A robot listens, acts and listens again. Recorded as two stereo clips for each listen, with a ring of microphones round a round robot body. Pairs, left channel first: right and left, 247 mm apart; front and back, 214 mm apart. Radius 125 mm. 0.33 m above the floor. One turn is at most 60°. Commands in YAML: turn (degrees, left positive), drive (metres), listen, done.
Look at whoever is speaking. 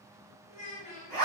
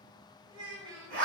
turn: -60
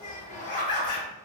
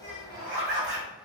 turn: -60
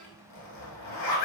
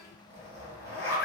turn: -30
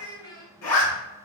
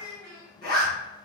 turn: -15
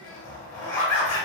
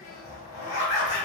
listen: true
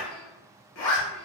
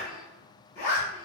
listen: true
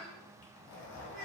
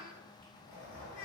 done: "I heard a child speaking from this way, but can't make it out now."